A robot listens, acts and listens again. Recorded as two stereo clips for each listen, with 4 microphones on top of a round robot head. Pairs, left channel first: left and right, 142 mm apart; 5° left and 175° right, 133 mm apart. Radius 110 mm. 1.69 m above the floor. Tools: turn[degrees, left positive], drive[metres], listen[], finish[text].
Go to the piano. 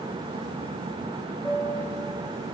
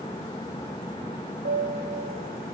Thought: The piano: 170° left.
Action: turn[170]
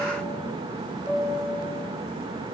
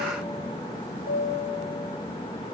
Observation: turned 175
Action: drive[1.0]
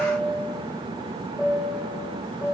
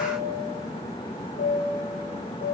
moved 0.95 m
Action: drive[1.0]
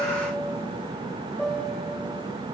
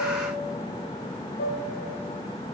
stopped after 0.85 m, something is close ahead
Action: finish[Arrived at the piano, straight ahead.]